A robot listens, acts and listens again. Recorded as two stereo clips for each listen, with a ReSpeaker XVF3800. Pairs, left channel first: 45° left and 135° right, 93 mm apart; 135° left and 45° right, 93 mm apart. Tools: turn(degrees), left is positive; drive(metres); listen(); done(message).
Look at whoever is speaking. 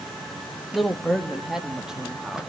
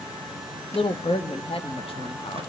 turn(degrees=140)
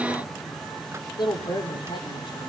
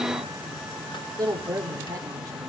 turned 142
turn(degrees=10)
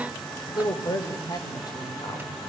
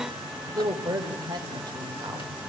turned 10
done("Facing the woman speaking, over 4 m away.")